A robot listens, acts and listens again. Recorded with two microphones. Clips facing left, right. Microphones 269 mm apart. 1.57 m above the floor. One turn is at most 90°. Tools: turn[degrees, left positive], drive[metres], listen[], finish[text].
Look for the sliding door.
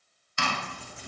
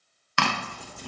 Action: listen[]
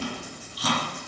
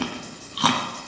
Action: listen[]
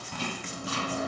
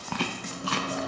Thought: The sliding door: about 55° right or 125° right.
Action: turn[-55]
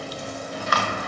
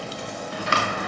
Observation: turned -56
Thought: So it is at 70° right.
Action: turn[-70]
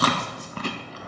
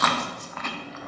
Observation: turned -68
Action: finish[Facing the sliding door.]